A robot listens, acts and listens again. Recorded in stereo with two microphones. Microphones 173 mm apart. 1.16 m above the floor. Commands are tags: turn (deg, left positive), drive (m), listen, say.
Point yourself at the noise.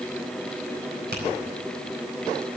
<listen/>
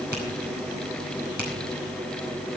<listen/>
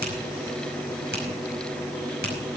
<turn deg="-75"/>
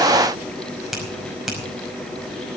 <say>Facing the finger snap, over 4 m away.</say>